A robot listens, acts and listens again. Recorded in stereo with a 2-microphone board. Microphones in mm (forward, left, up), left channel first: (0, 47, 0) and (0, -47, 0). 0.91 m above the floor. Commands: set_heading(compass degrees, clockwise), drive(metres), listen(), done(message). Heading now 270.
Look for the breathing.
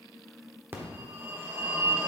listen()
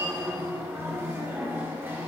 listen()
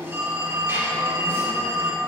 done("I can't make out breathing, only a phone ringing.")